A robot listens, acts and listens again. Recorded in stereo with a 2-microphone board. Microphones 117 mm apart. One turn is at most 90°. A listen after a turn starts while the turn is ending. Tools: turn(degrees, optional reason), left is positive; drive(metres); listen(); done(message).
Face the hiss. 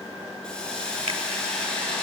turn(degrees=30)
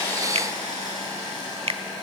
turn(degrees=90, reason="So it is at 145° left.")
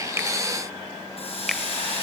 turn(degrees=60, reason="The hiss is now 60° left.")
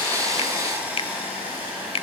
turn(degrees=-15, reason="The hiss is now 15° right.")
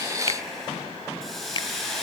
done("Facing the hiss, over 4 m away.")